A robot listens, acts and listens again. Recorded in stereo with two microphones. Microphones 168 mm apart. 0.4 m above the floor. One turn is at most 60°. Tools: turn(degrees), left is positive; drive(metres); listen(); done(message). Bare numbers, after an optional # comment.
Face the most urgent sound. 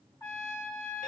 listen()
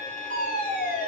# The fire alarm: about 70° left or 110° left.
turn(60)
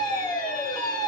# So it is at 35° left.
turn(35)
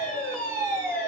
# The fire alarm is now 10° left.
turn(10)
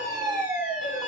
done("Facing the fire alarm.")